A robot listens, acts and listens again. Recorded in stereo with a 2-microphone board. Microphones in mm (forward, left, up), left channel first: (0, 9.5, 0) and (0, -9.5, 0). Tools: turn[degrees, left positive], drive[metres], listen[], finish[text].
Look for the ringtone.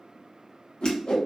Action: listen[]
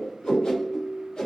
Thought: The ringtone: about 55° left or 125° left.
Action: turn[55]
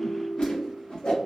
Action: finish[Facing the ringtone.]